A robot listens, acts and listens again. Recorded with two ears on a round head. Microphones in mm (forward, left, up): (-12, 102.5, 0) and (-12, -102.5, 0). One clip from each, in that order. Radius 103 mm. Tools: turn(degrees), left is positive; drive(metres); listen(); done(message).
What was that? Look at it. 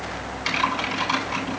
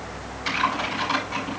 turn(degrees=20)
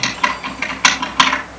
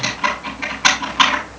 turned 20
turn(degrees=135)
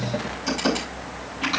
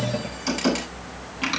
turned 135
turn(degrees=-15)
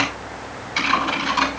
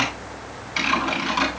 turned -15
done("Found it: typing on a keyboard, straight ahead, over 4 m away.")